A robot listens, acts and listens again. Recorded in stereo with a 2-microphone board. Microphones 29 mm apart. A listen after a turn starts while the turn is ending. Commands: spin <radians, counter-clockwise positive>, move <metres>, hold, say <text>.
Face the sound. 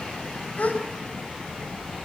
spin 1.05
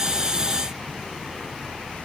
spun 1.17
hold
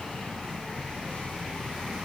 say I heard a gasp, but can't make it out now. It was about 5° right or 55° left.